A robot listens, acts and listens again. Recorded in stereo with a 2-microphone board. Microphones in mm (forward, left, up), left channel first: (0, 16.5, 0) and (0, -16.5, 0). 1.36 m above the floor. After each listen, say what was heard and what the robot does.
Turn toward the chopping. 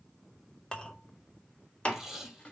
The chopping: about 35° left or 145° left. Turn 35° left.
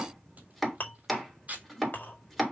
Found it: chopping, straight ahead, 2 to 4 m away.